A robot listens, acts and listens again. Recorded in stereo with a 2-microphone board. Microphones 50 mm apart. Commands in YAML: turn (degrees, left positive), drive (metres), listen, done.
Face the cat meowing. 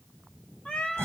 turn: 20
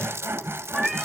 done: "Found it: a cat meowing, straight ahead, 1 to 2 m away."